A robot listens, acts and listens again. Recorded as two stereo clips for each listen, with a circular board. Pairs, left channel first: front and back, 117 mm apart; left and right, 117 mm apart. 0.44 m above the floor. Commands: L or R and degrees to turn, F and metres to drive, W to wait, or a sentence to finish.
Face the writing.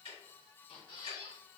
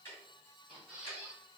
W
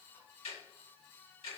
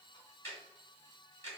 W
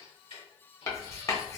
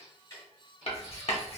L60
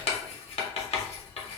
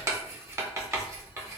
R25
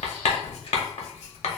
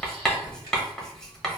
Found it: writing, straight ahead, under 1 m away.